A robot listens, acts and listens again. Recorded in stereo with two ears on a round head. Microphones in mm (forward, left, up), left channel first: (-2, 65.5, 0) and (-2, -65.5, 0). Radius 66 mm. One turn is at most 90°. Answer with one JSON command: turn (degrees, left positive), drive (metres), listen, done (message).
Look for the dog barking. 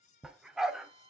{"turn": -30}
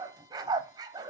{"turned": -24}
{"turn": -90}
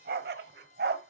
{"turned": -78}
{"turn": -75}
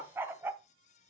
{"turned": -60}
{"turn": -15}
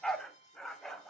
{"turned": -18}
{"done": "Found it: a dog barking, straight ahead."}